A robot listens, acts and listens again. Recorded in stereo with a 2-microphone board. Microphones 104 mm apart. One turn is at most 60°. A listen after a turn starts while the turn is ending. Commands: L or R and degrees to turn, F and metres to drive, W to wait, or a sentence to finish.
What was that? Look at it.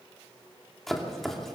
L30
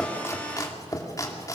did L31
L60
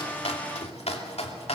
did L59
L60
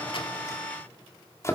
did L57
L25
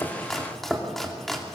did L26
Found it: chopping, straight ahead.